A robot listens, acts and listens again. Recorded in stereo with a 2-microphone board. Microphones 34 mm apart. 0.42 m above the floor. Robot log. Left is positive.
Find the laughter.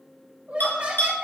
note: The laughter: about 45° right or 135° right.
cmd yaw -45
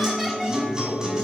cmd idle
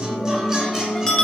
cmd idle
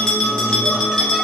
end: I heard laughter, but can't make it out now. It was about straight ahead or 90° right.